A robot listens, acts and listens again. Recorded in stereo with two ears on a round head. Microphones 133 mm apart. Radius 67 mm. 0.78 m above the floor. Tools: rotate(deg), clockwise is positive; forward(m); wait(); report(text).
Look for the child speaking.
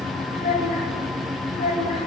rotate(-50)
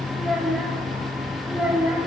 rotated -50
rotate(10)
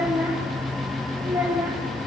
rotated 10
rotate(15)
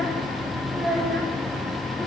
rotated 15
rotate(10)
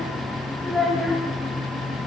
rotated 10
report("Facing the child speaking.")